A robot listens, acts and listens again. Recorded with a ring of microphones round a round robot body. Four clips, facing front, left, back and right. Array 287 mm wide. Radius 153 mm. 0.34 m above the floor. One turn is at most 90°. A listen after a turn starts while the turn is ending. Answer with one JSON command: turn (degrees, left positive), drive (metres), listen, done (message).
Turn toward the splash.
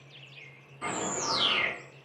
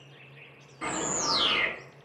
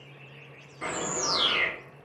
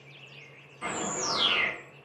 {"listen": true}
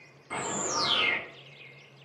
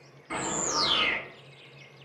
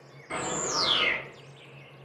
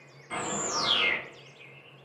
{"listen": true}
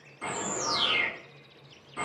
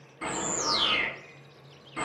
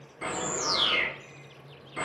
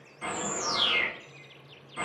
{"done": "I can't make out a splash, only a bird."}